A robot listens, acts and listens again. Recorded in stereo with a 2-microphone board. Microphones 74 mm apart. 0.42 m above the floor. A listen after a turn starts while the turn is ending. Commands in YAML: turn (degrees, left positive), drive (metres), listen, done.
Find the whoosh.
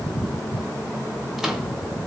listen: true
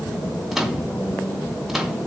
listen: true
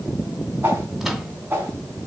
turn: -30
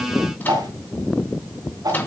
turn: -115
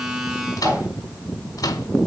listen: true
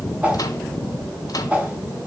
turn: -20
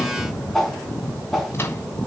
done: "Facing the whoosh, over 4 m away."